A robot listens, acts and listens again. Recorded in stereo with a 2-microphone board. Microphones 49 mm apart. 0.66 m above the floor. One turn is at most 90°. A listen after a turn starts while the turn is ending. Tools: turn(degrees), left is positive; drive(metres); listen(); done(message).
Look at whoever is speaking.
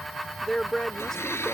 turn(degrees=30)
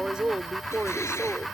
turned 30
turn(degrees=-20)
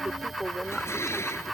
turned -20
done("Found it: a woman speaking, straight ahead.")